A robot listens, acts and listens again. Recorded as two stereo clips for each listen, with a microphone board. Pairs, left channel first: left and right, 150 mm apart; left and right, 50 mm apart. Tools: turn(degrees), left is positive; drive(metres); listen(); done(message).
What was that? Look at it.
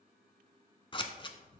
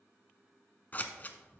turn(degrees=35)
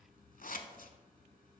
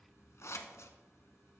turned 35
turn(degrees=110)
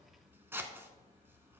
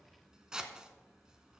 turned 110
turn(degrees=-15)
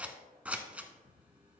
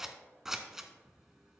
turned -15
turn(degrees=-10)
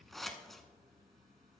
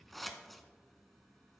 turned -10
done("Facing the scissors, under 1 m away.")